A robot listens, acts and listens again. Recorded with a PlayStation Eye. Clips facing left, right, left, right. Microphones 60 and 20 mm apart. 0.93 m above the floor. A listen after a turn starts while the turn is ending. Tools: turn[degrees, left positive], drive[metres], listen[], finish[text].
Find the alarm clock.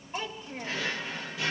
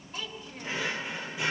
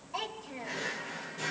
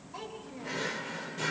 Action: listen[]
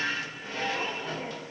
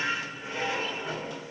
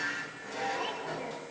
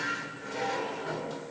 Action: listen[]
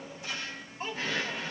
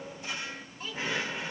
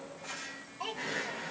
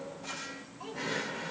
Action: finish[I can't make out an alarm clock, only a drawer and a child speaking.]